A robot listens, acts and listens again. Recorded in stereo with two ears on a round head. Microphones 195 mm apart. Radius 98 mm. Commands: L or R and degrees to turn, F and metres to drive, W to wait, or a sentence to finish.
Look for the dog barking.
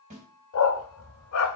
L70
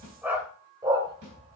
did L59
R25
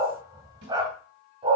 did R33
R25
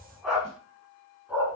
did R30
R10
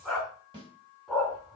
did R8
Found it: a dog barking, straight ahead.